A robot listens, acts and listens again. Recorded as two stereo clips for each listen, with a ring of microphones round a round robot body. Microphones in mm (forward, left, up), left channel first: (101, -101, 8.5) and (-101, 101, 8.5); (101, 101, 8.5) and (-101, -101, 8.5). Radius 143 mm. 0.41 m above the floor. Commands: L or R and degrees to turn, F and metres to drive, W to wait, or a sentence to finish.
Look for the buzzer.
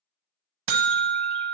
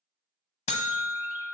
L115
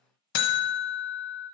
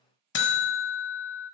Found it: a buzzer, straight ahead.